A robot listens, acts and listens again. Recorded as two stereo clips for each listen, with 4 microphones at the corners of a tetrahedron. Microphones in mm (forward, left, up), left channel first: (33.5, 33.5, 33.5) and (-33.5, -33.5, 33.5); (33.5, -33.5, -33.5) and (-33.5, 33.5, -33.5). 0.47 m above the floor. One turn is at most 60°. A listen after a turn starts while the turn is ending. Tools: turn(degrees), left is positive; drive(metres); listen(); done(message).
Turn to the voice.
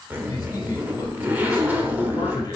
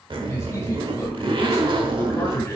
turn(degrees=10)
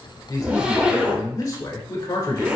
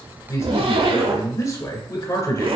done("Found it: a man speaking, straight ahead.")